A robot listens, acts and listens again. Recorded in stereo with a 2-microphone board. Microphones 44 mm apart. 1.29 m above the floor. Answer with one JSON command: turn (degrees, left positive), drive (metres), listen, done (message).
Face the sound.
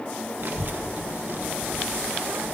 {"turn": -50}
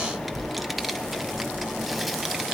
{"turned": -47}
{"done": "Found it: a child speaking, straight ahead, under 1 m away."}